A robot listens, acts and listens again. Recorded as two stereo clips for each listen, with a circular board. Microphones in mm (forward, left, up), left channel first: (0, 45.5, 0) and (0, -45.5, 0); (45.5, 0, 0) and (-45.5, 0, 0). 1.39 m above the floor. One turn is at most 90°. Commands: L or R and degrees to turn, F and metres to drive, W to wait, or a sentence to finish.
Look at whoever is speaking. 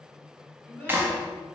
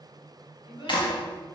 L20
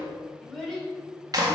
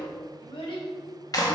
Found it: a child speaking, straight ahead.